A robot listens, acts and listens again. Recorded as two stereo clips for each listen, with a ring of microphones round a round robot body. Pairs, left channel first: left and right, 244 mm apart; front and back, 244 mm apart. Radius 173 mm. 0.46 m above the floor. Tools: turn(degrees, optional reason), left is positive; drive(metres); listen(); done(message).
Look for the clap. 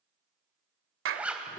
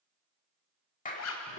turn(degrees=-65, reason="The clap: 65° right.")
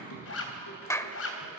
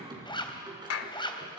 turn(degrees=10, reason="The clap is now 10° left.")
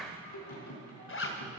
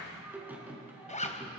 done("Found it: a clap, straight ahead.")